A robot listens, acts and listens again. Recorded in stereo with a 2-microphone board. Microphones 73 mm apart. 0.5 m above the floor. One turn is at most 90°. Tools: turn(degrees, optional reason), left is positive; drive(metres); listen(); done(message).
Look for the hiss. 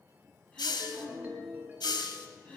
turn(degrees=90)
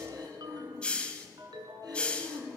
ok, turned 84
turn(degrees=15, reason="So it is at 15° left.")
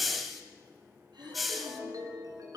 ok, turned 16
done("Found it: a hiss, straight ahead, 1 to 2 m away.")